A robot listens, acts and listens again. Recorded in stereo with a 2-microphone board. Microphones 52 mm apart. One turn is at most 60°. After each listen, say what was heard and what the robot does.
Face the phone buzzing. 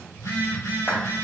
Turn 60° left.
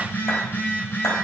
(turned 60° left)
So it is at 40° left. Turn 40° left.
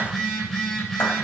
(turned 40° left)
Facing the phone buzzing.